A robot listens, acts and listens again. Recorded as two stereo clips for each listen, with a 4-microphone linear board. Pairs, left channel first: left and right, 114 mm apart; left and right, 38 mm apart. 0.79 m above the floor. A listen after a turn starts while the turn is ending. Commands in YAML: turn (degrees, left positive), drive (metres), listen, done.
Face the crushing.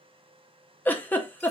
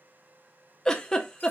listen: true
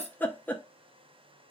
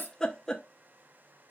listen: true
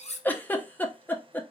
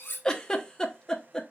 done: "I can't make out crushing, only a giggle and cutlery clinking."